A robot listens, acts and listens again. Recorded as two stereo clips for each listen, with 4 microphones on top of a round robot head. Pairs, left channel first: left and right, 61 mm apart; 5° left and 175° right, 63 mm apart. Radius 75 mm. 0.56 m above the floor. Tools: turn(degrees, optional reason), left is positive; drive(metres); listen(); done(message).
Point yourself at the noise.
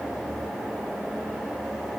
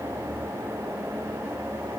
listen()
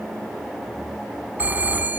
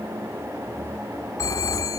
turn(degrees=-30, reason="The phone ringing: 30° right.")
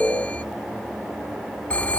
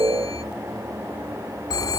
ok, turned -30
turn(degrees=25, reason="The phone ringing is now 25° left.")
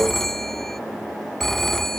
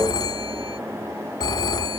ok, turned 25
done("Facing the phone ringing.")